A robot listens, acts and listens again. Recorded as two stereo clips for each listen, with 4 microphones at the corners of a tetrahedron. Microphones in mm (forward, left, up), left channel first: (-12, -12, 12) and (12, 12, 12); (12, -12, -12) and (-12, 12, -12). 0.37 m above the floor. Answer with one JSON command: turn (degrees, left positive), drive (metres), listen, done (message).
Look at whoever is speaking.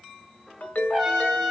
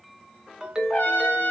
{"listen": true}
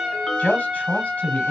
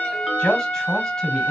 {"turn": -110}
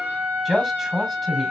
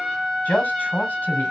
{"turn": -35}
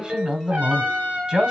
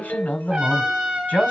{"turn": -15}
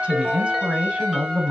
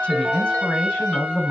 {"done": "Facing the man speaking, 1 to 2 m away."}